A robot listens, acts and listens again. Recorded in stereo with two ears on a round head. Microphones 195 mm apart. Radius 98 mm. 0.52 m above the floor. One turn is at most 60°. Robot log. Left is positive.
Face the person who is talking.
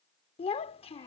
note: The child speaking: about 25° left or 155° left.
cmd yaw +25
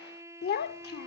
note: So it is at 125° left.
cmd yaw +60
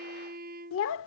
note: The child speaking is now 100° left.
cmd yaw +60
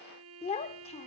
note: The child speaking is now 30° left.
cmd yaw +30
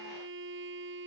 cmd idle
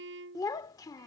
note: The child speaking is now 15° left.
cmd yaw +15
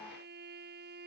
cmd idle
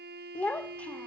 end: Found it: a child speaking, straight ahead.